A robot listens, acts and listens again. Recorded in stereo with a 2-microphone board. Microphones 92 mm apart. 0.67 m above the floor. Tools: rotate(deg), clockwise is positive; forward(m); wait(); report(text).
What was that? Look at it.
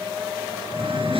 rotate(65)
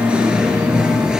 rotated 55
report("Facing the singing.")